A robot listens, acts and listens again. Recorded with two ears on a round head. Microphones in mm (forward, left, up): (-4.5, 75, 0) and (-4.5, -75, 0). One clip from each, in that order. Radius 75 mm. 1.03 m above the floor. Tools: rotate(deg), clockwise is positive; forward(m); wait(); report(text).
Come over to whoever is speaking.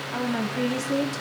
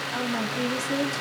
rotate(30)
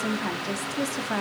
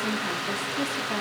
rotate(-20)
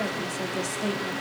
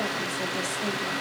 wait()
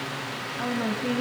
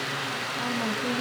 forward(1.0)
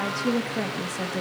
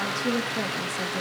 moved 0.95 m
forward(1.0)
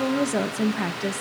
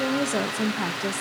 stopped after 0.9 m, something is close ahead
rotate(10)
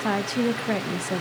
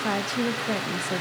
report("Arrived at the woman speaking, straight ahead.")